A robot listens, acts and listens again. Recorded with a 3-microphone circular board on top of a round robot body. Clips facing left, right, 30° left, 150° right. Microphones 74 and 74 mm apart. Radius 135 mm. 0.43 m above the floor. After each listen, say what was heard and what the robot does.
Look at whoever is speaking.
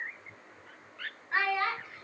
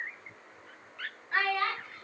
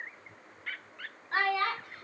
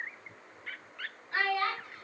The child speaking: 10° left. Turn 10° left.
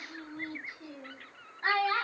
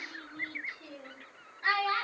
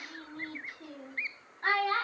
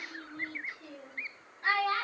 The child speaking is now 55° left. Turn 55° left.
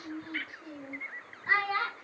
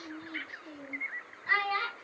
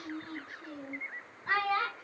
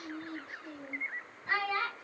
The child speaking is now 30° left. Turn 30° left.
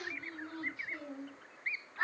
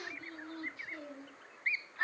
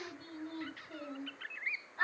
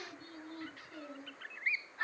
The child speaking is now 25° left. Turn 25° left.
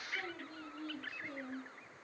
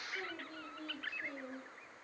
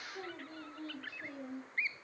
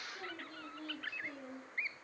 The child speaking is now 10° right. Turn 10° right.
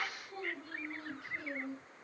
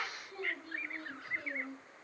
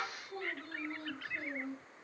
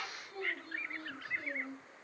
Found it: a child speaking, straight ahead, 2 to 4 m away.